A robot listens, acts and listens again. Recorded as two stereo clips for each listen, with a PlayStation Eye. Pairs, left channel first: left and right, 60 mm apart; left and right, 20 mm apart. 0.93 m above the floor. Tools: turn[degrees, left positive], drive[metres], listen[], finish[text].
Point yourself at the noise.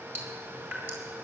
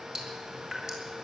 Thought: The dripping: about 35° right or 145° right.
Action: turn[-35]
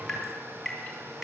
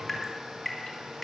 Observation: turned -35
Action: finish[Facing the dripping, 2 to 4 m away.]